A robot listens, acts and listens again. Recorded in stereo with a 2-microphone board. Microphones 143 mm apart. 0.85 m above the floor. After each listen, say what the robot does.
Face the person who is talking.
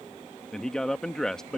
Turn 30° left.
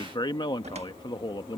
Turn 140° left.
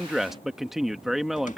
Facing the man speaking.